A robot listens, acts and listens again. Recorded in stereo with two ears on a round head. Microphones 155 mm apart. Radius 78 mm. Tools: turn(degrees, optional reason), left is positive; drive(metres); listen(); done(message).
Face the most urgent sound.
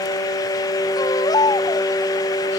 turn(degrees=20, reason="The baby crying: about 20° left or 160° left.")
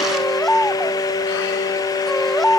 done("Found it: a baby crying, straight ahead.")